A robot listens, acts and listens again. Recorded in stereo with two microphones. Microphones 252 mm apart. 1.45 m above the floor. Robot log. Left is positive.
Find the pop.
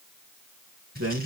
cmd idle
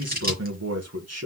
cmd idle
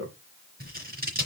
end: I can't make out a pop, only a man speaking and scissors.